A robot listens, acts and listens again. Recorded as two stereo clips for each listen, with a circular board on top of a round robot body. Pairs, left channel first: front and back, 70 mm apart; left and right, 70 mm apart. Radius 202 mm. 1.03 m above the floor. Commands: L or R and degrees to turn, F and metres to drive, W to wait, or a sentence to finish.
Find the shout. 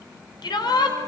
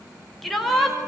Found it: a shout, straight ahead.